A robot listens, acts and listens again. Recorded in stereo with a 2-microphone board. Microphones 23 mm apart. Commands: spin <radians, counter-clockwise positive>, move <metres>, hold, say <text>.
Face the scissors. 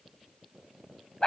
hold
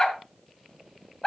hold
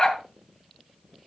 say I can't make out scissors, only a dog barking.